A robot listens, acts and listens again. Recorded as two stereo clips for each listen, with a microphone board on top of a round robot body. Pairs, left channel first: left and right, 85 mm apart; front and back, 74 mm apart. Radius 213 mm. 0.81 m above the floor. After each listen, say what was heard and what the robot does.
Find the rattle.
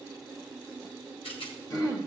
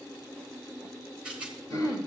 The rattle: 100° left. Turn 100° left.
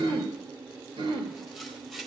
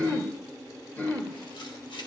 Facing the rattle, 1 to 2 m away.